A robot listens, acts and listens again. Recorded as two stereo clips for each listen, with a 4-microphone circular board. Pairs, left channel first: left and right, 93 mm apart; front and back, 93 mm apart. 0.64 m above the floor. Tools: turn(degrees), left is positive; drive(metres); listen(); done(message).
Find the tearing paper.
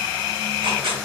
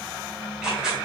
turn(degrees=-95)
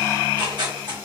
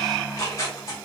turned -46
turn(degrees=-50)
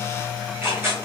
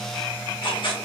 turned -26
turn(degrees=-25)
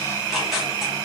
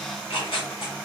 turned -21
done("Facing the tearing paper, 1 to 2 m away.")